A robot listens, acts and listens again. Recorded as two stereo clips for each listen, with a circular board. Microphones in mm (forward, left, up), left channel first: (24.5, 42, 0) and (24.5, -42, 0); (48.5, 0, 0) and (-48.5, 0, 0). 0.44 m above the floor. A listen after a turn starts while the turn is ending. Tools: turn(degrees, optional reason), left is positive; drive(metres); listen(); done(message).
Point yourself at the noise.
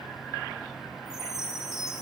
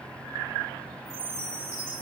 turn(degrees=-175, reason="The chime: 175° right.")
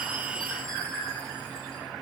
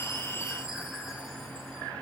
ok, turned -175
listen()
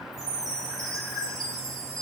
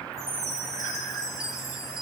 turn(degrees=-50, reason="The chime is now 50° right.")
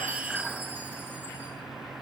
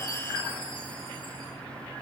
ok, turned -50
listen()
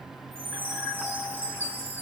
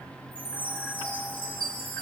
turn(degrees=-25, reason="The chime is now 25° right.")
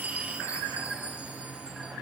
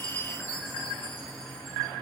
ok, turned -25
turn(degrees=-20, reason="The chime is now 20° right.")
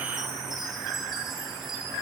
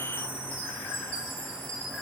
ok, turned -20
done("Found it: a chime, straight ahead.")